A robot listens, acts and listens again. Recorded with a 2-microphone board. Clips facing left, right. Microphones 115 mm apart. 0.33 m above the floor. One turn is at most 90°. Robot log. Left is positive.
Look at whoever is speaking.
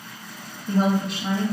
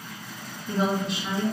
note: The woman speaking: about 55° left or 125° left.
cmd yaw +55
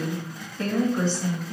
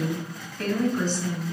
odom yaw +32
note: So it is at 40° left.
cmd yaw +40
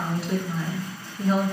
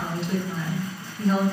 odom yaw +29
note: The woman speaking is now 10° left.
cmd yaw +10
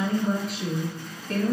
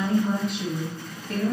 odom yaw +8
end: Found it: a woman speaking, straight ahead, 1 to 2 m away.